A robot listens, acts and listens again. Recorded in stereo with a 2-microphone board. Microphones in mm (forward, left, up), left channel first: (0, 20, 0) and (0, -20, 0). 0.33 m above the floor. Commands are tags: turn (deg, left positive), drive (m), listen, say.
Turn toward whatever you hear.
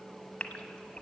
<turn deg="30"/>
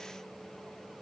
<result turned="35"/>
<listen/>
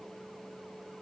<say>I heard a gasp, but can't make it out now. It was about 5° right or 115° left.</say>